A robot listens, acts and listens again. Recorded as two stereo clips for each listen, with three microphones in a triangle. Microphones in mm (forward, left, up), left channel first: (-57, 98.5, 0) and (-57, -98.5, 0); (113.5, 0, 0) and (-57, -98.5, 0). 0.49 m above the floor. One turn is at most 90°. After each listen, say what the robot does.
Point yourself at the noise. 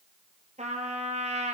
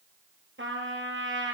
Turn 90° right.
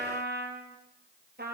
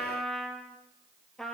Turn 60° right.
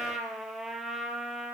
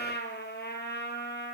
Facing the trumpet, 2 to 4 m away.